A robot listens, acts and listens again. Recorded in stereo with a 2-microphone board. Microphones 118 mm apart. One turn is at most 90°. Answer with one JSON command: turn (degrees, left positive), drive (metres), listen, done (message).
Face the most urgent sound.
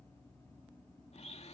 {"listen": true}
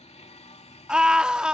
{"turn": -30}
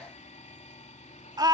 {"turn": -90}
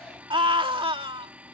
{"turn": -45}
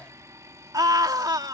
{"turn": -35}
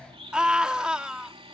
{"turn": -10}
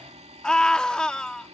{"done": "Found it: a scream, straight ahead."}